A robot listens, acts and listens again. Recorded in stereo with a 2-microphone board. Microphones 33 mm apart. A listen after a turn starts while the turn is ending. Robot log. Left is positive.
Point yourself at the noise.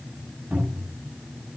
note: The cupboard door: about 45° right or 135° right.
cmd yaw -45
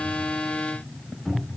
end: Found it: a cupboard door, straight ahead, over 4 m away.